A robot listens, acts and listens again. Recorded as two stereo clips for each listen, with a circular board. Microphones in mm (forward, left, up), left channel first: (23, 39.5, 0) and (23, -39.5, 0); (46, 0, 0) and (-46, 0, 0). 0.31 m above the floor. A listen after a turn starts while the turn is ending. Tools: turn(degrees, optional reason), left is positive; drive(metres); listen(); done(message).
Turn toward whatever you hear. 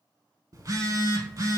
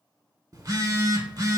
turn(degrees=-130, reason="The phone buzzing: 130° right.")
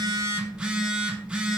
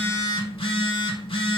turn(degrees=-15, reason="The phone buzzing is now 15° right.")
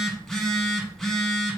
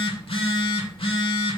done("Facing the phone buzzing.")